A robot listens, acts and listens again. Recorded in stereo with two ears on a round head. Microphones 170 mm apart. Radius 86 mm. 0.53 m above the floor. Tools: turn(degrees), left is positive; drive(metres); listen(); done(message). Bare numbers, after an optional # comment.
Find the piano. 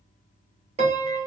# The piano: about 35° right or 145° right.
turn(-35)
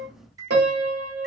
# So it is at 105° right.
turn(-105)
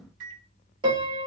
# The piano is now 30° right.
turn(-30)
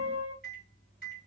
# The piano is now 10° right.
turn(-10)
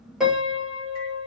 done("Found it: a piano, straight ahead, 1 to 2 m away.")